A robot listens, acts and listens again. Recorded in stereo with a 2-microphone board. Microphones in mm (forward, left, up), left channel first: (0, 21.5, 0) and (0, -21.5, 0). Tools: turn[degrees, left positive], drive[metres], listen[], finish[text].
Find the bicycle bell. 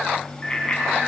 Thought: The bicycle bell: about 20° left or 160° left.
Action: turn[20]
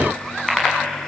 Action: finish[Found it: a bicycle bell, straight ahead.]